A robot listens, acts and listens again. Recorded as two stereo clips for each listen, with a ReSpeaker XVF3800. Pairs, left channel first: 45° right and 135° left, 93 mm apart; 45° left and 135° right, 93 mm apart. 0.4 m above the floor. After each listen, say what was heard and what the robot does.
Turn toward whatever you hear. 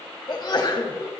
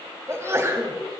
The sneeze: 75° right. Turn 75° right.
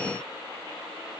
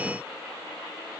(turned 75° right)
I heard a sneeze from this way, but can't make it out now.